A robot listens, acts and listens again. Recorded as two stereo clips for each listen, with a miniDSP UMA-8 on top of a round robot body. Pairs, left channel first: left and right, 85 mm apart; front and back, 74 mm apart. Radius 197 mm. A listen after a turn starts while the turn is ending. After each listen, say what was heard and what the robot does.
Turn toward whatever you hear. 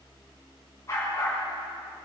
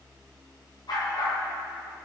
The dog barking: 35° left. Turn 35° left.
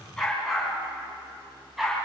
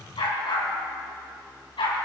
Found it: a dog barking, straight ahead, 2 to 4 m away.